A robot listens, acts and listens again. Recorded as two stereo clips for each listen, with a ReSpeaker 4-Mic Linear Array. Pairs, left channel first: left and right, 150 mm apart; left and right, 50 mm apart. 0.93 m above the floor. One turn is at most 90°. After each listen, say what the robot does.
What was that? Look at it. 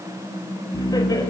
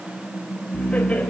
Turn 25° left.
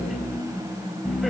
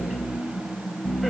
Found it: laughter, straight ahead, over 4 m away.